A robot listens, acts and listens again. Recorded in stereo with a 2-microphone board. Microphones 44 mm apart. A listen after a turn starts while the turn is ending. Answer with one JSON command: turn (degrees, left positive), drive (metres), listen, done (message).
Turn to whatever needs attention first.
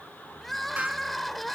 {"turn": 30}
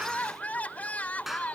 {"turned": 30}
{"turn": 145}
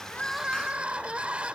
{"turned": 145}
{"turn": -25}
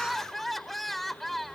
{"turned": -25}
{"done": "Facing the crying."}